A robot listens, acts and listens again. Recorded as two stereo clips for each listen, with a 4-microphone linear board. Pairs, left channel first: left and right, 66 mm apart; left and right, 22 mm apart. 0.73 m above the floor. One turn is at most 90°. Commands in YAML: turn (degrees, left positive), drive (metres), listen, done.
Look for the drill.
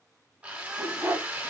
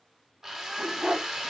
turn: -20
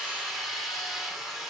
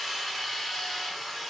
done: "Found it: a drill, straight ahead, 1 to 2 m away."